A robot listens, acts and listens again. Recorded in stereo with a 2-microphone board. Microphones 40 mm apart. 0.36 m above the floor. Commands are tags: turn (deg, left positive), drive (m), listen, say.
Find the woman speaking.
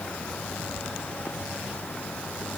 <listen/>
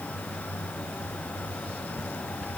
<listen/>
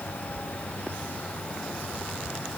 <say>I can't make out a woman speaking to turn to.</say>